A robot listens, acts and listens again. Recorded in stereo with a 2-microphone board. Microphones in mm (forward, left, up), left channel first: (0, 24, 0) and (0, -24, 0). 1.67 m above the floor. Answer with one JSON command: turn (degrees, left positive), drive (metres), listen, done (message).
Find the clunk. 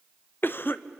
{"listen": true}
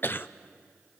{"listen": true}
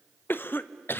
{"done": "I can't make out a clunk, only a cough."}